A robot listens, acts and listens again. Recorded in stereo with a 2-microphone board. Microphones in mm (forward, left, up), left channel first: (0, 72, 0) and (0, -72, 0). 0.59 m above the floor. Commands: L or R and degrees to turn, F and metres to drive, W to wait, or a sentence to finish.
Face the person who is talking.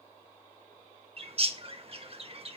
W
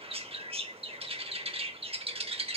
W
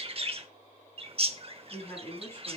L15
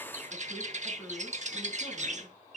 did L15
W
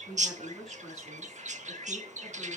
Found it: a woman speaking, straight ahead.